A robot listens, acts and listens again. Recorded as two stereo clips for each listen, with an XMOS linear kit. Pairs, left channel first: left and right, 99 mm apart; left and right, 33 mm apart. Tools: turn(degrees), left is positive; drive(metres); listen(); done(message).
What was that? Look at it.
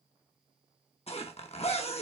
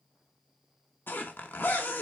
turn(degrees=90)
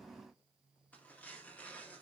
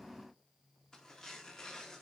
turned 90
turn(degrees=15)
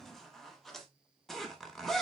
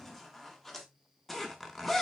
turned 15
done("Found it: a zipper, straight ahead.")